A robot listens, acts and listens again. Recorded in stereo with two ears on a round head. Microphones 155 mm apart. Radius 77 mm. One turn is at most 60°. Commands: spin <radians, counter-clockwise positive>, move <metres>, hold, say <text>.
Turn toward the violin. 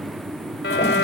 spin 1.05
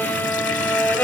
spin 0.17
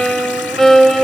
say Facing the violin.